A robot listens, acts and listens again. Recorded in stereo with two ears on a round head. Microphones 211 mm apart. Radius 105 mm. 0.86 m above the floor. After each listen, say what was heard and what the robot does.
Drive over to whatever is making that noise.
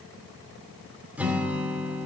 Turn 30° right.
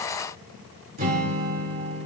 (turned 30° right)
So it is at 140° right. Turn 140° right.
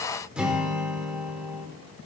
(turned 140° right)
Drive 1.0 m forward.
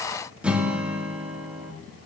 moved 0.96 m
Drive 1.0 m forward.
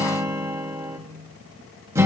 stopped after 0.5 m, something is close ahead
The guitar is now 15° right. Turn 15° right.
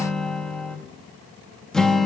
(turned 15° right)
I am next to the guitar.